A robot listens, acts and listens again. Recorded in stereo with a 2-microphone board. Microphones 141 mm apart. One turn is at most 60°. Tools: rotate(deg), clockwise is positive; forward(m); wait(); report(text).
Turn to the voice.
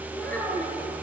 rotate(-30)
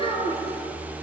rotate(-60)
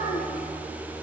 rotate(-60)
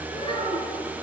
rotate(-35)
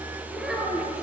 report("Found it: a child speaking, straight ahead, over 4 m away.")